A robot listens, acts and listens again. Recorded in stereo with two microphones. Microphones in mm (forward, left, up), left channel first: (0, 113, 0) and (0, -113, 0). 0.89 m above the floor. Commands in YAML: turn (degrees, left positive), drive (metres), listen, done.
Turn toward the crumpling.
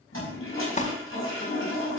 turn: 35
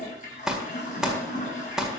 done: "Facing the crumpling, 1 to 2 m away."